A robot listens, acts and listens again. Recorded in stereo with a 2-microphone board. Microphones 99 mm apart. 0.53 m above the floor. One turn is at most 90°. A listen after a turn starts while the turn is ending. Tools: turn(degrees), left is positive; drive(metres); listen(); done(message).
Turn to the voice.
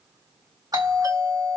listen()
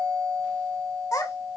turn(degrees=35)
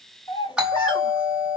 turn(degrees=90)
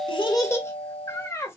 turn(degrees=30)
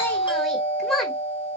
done("Found it: a child speaking, straight ahead.")